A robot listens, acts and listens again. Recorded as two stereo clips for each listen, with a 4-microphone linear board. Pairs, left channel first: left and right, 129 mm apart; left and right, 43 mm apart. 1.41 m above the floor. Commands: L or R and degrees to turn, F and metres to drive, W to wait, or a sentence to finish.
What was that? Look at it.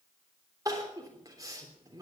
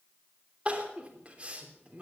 R25
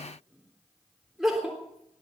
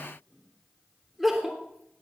Found it: crying, straight ahead, 2 to 4 m away.